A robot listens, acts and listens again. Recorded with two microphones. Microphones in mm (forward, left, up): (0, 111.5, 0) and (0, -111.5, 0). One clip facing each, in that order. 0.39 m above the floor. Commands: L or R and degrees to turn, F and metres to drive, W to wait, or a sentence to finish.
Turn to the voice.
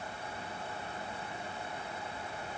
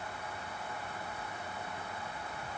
W
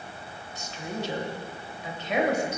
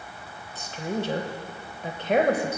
R55
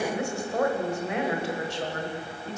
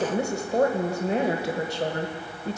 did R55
R45
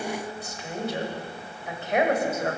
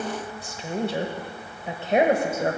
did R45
R35
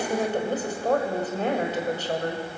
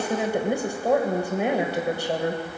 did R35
R15
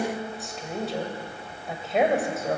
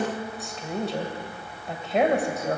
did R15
Facing the woman speaking.